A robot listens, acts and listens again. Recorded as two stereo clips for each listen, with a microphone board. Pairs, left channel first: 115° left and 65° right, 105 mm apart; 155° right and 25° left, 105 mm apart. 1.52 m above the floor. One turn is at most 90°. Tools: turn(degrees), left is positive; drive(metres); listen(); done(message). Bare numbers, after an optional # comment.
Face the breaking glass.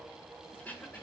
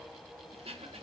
listen()
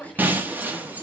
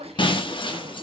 # The breaking glass: 135° right.
turn(-90)
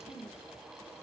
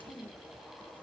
# Nothing new. It was at 45° right.
turn(-45)
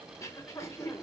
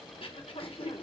done("I heard breaking glass from this way, but can't make it out now.")